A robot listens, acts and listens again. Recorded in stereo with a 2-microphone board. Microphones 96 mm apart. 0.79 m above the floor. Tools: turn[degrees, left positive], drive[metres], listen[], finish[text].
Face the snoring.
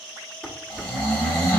Thought: The snoring: about 20° left or 160° left.
Action: turn[20]
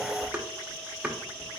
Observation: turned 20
Action: listen[]
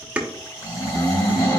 Thought: So it is at 140° left.
Action: turn[140]
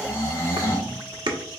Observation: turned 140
Thought: The snoring is now 30° left.
Action: turn[30]
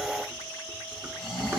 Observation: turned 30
Action: finish[Found it: snoring, straight ahead.]